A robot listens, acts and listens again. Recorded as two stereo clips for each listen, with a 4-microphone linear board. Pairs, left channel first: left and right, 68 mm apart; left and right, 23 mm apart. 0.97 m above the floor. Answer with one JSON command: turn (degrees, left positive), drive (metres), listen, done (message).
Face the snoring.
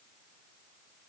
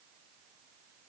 {"listen": true}
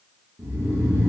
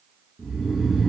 {"turn": -30}
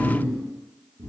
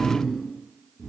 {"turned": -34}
{"turn": -115}
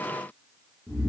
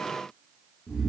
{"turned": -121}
{"done": "Facing the snoring, 1 to 2 m away."}